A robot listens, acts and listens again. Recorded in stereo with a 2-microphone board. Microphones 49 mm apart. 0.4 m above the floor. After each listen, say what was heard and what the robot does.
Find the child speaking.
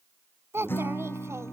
The child speaking: about 65° right or 115° right. Turn 65° right.
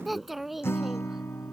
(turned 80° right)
Facing the child speaking.